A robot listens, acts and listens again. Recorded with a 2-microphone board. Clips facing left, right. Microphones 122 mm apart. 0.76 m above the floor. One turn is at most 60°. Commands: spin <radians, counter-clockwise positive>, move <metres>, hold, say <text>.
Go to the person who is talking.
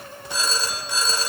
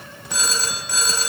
hold
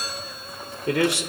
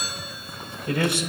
spin 1.05
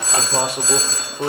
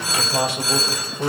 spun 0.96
spin 0.79
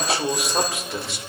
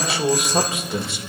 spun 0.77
move 1.0
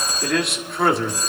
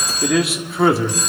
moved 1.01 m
move 1.0
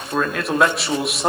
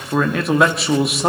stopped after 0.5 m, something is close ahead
say Arrived at the man speaking, straight ahead.